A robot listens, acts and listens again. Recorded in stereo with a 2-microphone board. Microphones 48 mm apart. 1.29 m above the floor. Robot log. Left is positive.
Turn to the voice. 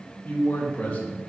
note: The man speaking: about 35° left or 145° left.
cmd yaw +35
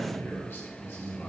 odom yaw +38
note: So it is at 130° left.
cmd yaw +130
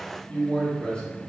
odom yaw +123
note: The man speaking is now 20° left.
cmd yaw +20
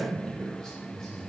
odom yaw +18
note: The man speaking is now 10° left.
cmd yaw +10
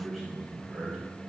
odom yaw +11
end: Facing the man speaking, 2 to 4 m away.